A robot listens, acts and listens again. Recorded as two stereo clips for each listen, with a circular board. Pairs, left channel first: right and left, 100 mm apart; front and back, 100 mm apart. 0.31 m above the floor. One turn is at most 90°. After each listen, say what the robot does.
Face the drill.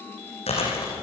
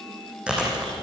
Keep listening.
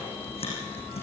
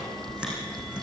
Keep listening.
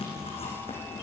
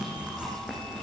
I can't make out a drill to turn to.